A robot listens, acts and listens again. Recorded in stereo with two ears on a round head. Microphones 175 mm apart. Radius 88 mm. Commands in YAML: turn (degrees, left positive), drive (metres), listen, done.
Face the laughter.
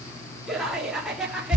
turn: -30
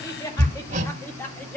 turn: 30
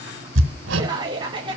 turn: -25
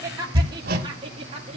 turn: -30
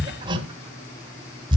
listen: true
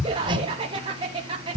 turn: -25
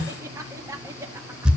turn: -15
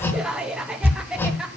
done: "Facing the laughter, 1 to 2 m away."